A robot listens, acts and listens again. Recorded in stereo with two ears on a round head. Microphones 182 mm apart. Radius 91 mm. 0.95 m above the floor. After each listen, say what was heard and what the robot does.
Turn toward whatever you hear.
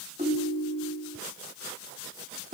The ringtone: about 30° right or 150° right. Turn 30° right.
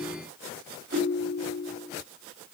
So it is at 120° right. Turn 120° right.
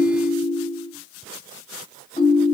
The ringtone is now 25° left. Turn 25° left.
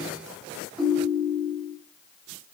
Found it: a ringtone, straight ahead.